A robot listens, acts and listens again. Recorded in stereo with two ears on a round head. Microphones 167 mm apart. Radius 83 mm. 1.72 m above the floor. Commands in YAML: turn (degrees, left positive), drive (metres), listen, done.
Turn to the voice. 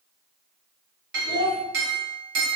turn: 45
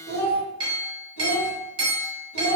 turn: 75
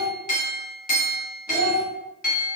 turn: -15
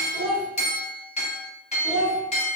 done: "Found it: a child speaking, straight ahead, 1 to 2 m away."